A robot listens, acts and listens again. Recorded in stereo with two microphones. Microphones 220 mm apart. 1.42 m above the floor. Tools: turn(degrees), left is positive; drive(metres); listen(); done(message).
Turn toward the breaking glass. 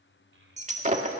turn(degrees=-35)
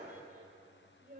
listen()
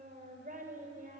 done("I heard breaking glass, but can't make it out now. It was about straight ahead or 110° right.")